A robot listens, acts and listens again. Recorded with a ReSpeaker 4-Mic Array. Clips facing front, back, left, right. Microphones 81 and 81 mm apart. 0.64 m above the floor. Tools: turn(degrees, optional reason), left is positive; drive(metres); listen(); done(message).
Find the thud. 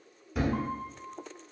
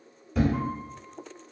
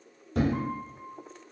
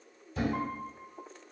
turn(degrees=85, reason="The thud: 85° left.")
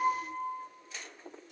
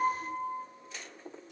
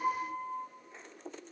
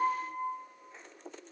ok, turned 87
done("I heard a thud from this way, but can't make it out now.")